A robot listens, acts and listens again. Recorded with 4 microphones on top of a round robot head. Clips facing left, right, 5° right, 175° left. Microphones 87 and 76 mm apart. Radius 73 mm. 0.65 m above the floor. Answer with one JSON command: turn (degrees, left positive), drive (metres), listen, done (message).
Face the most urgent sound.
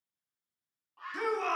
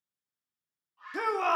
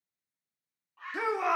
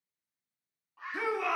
{"turn": -70}
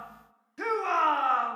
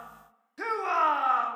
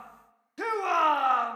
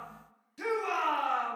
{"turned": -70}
{"done": "Found it: a shout, straight ahead, 1 to 2 m away."}